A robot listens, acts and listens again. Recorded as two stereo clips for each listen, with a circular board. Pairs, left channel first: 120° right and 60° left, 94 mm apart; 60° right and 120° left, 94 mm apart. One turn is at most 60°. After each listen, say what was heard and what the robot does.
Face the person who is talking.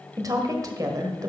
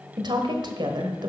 The woman speaking: 105° left. Turn 60° left.
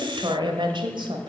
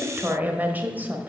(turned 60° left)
The woman speaking is now 55° left. Turn 55° left.
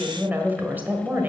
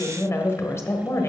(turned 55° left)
Found it: a woman speaking, straight ahead.